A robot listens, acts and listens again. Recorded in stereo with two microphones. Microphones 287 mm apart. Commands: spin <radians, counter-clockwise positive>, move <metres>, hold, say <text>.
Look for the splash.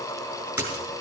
spin -0.52
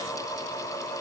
hold
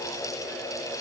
say I heard a splash, but can't make it out now. It was about 20° left or 140° right.